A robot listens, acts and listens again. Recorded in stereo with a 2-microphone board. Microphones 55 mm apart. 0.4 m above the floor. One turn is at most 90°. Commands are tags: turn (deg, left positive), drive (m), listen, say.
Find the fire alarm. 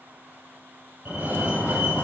<turn deg="-40"/>
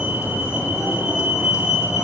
<turn deg="-90"/>
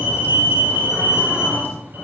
<turn deg="-40"/>
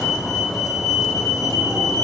<turn deg="10"/>
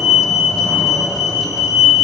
<say>Facing the fire alarm.</say>